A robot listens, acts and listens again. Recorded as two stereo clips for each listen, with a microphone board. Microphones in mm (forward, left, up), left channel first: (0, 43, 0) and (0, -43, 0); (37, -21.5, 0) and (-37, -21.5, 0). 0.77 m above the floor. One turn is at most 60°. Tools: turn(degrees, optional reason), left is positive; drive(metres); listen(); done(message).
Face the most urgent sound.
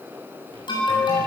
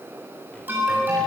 turn(degrees=60, reason="The alarm: 115° left.")
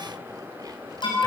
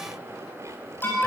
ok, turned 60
turn(degrees=60, reason="The alarm is now 60° left.")
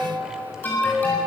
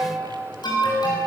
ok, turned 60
turn(degrees=20, reason="The alarm is now 20° left.")
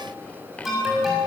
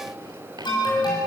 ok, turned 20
done("Found it: an alarm, straight ahead, over 4 m away.")